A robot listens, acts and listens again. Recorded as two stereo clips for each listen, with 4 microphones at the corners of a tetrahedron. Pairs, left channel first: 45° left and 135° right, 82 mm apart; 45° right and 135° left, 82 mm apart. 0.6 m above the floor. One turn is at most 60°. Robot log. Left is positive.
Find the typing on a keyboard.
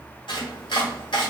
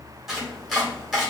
cmd idle
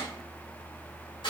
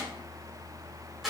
cmd idle
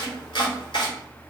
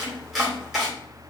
end: I can't make out typing on a keyboard to turn to.